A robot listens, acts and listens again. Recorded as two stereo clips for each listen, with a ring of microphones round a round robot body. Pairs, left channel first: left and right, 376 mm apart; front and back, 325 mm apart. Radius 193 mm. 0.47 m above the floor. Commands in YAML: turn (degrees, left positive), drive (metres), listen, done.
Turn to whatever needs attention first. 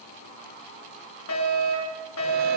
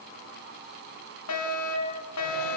turn: 35
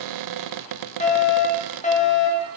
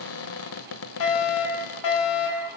turn: 20
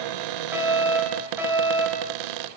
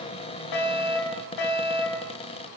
done: "Found it: a fire alarm, straight ahead."